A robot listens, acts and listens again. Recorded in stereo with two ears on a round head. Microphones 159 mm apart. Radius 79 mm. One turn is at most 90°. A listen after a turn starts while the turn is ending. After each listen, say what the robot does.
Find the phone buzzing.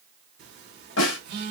Turn 60° right.
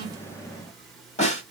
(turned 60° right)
Keep listening.
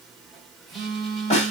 Facing the phone buzzing.